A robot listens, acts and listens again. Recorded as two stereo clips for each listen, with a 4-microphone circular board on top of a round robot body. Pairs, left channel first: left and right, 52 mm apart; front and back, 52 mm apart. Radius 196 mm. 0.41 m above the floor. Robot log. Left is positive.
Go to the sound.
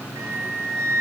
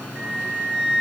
note: The flute: 105° right.
cmd yaw -105
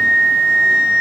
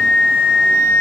note: The flute is now 20° right.
cmd yaw -20
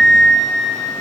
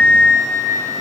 cmd fwd 1.0
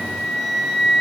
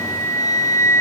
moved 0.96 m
cmd fwd 1.0
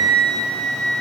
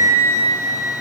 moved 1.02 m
note: The flute is now 10° left.
cmd yaw +10
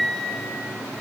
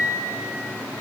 cmd fwd 1.0
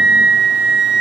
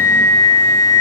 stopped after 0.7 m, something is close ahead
note: The flute is now 10° right.
cmd yaw -10
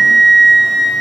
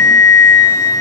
end: Arrived at the flute, straight ahead.